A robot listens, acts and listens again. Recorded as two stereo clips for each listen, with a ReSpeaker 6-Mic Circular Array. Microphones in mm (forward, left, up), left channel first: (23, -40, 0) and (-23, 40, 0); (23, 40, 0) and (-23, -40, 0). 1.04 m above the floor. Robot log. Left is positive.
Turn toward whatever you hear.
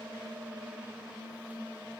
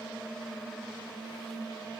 cmd idle
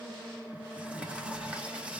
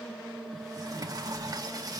note: The sliding door: 165° right.
cmd yaw -165
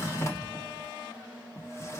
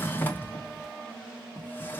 end: Facing the sliding door.